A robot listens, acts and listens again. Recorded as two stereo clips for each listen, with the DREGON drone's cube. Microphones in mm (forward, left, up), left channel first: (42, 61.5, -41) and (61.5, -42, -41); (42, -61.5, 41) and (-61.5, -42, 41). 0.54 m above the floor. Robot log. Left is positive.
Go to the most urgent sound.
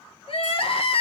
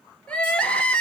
note: The crying: 70° left.
cmd yaw +70
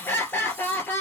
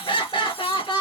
note: The crying is now 30° left.
cmd yaw +30
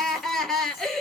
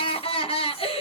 note: The crying is now 15° left.
cmd yaw +15
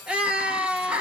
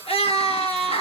cmd fwd 1.0
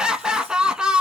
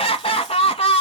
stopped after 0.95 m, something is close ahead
end: I am next to the crying.